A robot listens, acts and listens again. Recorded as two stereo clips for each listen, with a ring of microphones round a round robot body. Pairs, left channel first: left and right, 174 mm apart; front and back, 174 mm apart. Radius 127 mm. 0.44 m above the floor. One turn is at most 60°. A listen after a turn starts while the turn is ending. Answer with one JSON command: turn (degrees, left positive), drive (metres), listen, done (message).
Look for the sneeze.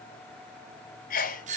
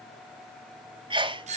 {"turn": 60}
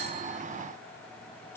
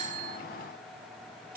{"turn": 60}
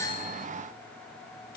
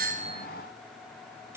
{"done": "I heard a sneeze from this way, but can't make it out now."}